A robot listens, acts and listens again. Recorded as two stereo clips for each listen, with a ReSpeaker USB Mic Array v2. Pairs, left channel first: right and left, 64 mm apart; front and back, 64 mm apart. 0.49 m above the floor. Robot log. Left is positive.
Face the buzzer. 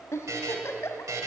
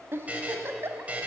note: The buzzer: 115° left.
cmd yaw +115
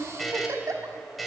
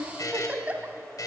end: Facing the buzzer.